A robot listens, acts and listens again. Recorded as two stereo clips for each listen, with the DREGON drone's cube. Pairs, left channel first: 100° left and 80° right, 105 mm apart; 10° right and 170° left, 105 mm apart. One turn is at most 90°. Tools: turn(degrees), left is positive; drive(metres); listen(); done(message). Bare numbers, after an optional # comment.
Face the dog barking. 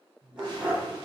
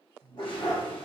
done("Facing the dog barking, 2 to 4 m away.")